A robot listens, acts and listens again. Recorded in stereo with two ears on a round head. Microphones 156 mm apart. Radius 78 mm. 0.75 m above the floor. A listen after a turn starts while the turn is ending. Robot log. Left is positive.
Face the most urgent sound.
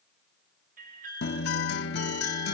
note: The alarm: about 50° right or 130° right.
cmd yaw -50
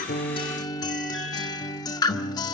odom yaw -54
cmd idle
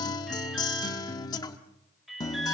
end: Facing the alarm, over 4 m away.